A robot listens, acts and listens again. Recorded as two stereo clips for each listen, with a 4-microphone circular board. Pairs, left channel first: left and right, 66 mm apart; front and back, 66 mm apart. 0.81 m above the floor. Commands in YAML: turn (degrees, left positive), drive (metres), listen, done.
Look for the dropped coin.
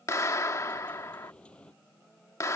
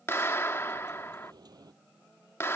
turn: 165
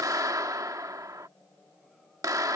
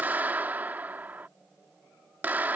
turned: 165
done: "Facing where the dropped coin came from. I can't hear it now."